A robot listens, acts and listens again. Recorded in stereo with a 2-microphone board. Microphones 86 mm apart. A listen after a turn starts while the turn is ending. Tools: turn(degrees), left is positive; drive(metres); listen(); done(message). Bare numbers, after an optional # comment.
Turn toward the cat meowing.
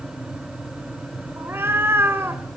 # The cat meowing: about 25° right or 155° right.
turn(-25)
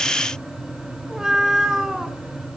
done("Facing the cat meowing, 1 to 2 m away.")